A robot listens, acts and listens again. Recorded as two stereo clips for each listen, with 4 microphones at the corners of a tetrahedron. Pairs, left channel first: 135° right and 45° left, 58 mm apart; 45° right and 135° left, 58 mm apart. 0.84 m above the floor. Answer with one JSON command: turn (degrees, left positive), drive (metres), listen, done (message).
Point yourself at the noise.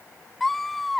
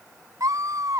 {"turn": 135}
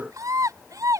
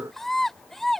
{"turn": 40}
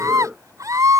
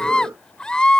{"turn": 30}
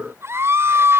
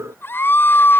{"done": "Facing the scream."}